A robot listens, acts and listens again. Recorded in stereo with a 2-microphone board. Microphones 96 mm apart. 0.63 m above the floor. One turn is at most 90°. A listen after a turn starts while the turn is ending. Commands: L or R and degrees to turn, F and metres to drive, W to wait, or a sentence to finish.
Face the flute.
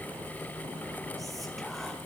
W
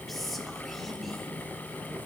W
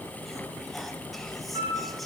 R70
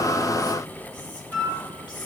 Found it: a flute, straight ahead.